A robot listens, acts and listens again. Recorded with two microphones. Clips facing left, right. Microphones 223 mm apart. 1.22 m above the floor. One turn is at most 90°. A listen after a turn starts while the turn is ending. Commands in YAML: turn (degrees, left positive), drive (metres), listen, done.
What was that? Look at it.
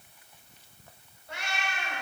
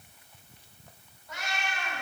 turn: 30
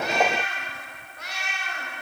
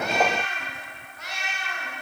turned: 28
turn: 90
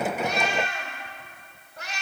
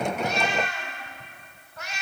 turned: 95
turn: 35
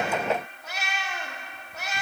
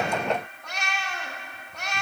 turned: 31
done: "Found it: a cat meowing, straight ahead, 1 to 2 m away."